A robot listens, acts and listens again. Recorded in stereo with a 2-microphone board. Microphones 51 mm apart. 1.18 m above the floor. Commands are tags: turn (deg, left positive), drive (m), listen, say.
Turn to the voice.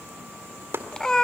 <listen/>
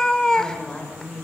<turn deg="20"/>
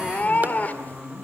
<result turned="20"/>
<say>Facing the woman speaking.</say>